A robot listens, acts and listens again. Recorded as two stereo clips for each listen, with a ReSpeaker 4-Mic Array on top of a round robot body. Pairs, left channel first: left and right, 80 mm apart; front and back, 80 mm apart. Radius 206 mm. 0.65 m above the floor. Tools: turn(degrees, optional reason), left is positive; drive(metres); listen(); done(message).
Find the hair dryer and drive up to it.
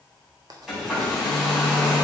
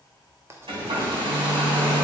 turn(degrees=180, reason="The hair dryer: straight behind.")
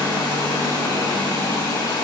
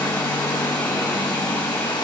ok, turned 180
turn(degrees=45, reason="The hair dryer is now 45° left.")
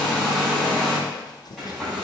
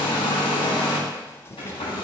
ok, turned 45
drive(metres=1.0)
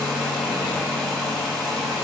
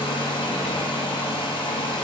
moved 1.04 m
drive(metres=1.0)
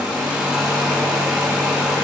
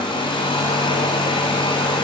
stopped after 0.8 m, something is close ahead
turn(degrees=-10, reason="The hair dryer is now 10° right.")
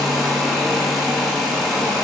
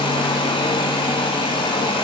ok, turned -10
done("Arrived at the hair dryer, straight ahead.")